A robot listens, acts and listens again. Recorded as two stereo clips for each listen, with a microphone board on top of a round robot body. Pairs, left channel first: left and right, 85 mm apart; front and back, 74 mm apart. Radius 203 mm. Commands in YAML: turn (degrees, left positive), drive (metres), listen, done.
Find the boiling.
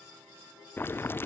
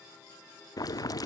turn: 30
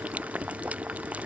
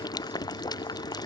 turn: -20
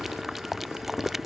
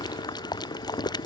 done: "Facing the boiling."